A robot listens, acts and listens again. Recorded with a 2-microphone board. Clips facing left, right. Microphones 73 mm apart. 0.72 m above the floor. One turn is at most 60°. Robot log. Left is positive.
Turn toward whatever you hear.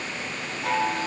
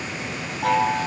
note: The chime: about 75° right or 105° right.
cmd yaw -60
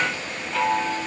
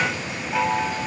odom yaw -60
note: So it is at 15° right.
cmd yaw -15
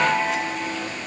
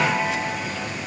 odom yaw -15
end: Facing the chime, 2 to 4 m away.